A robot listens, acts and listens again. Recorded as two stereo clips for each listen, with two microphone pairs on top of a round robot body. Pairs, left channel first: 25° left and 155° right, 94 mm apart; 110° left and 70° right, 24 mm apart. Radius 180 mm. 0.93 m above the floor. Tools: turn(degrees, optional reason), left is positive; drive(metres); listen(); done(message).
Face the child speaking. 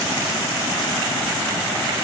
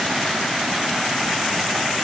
listen()
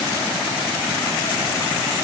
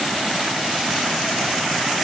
listen()
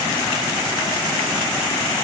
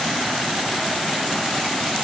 done("I can't make out a child speaking.")